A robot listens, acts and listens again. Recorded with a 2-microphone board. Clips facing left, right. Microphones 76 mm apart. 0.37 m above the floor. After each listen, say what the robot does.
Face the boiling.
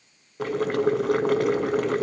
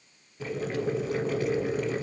Turn 75° left.
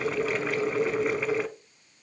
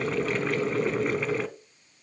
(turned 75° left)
Found it: boiling, straight ahead.